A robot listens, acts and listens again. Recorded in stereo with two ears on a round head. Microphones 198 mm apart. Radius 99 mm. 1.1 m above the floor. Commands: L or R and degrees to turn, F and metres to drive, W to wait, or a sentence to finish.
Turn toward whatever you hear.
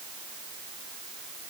W
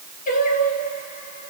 L35
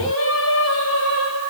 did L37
L115
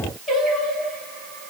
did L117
Facing the singing.